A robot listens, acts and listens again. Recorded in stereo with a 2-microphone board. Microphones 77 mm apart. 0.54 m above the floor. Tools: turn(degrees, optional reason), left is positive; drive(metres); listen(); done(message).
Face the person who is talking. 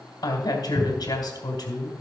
turn(degrees=65, reason="The woman speaking: about 65° left or 115° left.")
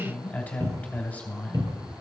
turn(degrees=25, reason="So it is at 25° left.")
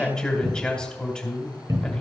turn(degrees=15, reason="The woman speaking is now 15° left.")
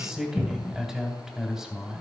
done("Found it: a woman speaking, straight ahead.")